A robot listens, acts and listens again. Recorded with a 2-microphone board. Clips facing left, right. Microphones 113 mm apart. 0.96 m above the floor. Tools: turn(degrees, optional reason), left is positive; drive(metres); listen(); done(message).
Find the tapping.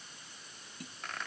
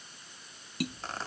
turn(degrees=-90)
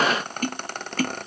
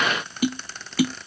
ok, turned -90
turn(degrees=-10, reason="So it is at 10° right.")
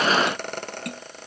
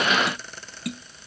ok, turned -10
done("Facing the tapping.")